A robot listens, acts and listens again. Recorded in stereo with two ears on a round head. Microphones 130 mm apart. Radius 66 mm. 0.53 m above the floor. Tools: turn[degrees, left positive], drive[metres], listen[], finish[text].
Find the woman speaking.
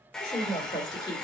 Thought: The woman speaking: about 30° left or 150° left.
Action: turn[30]
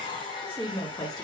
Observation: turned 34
Thought: The woman speaking: about 25° left or 155° left.
Action: turn[25]
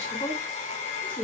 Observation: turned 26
Thought: The woman speaking: about 30° left or 150° left.
Action: turn[30]
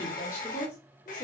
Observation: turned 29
Thought: The woman speaking: about 35° left or 145° left.
Action: turn[35]
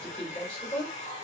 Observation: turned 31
Thought: The woman speaking: about 20° left or 160° left.
Action: turn[20]
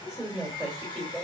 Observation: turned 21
Action: finish[Facing the woman speaking, 2 to 4 m away.]